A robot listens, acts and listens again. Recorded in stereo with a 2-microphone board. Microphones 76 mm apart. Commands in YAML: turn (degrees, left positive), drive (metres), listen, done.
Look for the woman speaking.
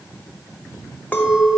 listen: true
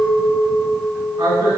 turn: -65
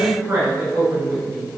turn: -45
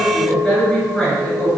done: "Facing the woman speaking."